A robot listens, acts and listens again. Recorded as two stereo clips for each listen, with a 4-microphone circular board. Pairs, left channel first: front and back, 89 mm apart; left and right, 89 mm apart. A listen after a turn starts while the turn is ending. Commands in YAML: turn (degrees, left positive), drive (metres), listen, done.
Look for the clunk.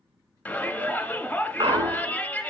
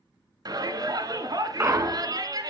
turn: -150
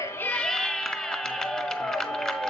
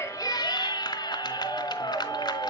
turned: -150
done: "I heard a clunk from this way, but can't make it out now."